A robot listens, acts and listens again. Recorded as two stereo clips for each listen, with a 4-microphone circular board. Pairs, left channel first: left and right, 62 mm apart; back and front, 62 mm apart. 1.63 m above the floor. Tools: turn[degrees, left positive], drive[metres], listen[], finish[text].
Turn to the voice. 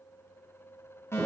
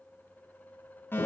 Action: listen[]
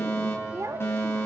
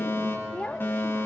Thought: The child speaking: 110° right.
Action: turn[-110]
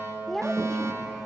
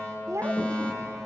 Action: finish[Facing the child speaking.]